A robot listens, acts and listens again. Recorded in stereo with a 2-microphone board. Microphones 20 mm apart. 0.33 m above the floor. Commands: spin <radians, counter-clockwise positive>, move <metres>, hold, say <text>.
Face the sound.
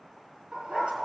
spin -1.22
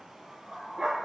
spin -0.70
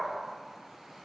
spin -0.26
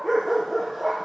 say Found it: a dog barking, straight ahead, over 4 m away.